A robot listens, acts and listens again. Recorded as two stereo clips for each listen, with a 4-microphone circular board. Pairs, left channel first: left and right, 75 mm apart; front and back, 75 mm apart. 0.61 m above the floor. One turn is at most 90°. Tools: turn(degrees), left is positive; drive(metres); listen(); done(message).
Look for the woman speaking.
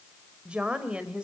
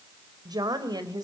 turn(degrees=-90)
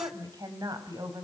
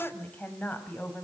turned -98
turn(degrees=-65)
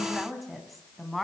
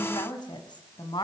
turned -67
done("Found it: a woman speaking, straight ahead, over 4 m away.")